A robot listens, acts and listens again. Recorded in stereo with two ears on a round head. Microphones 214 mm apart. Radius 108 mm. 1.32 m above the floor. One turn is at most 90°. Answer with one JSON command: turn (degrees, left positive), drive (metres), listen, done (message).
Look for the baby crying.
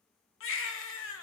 {"turn": 55}
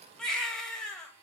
{"done": "Found it: a baby crying, straight ahead, 1 to 2 m away."}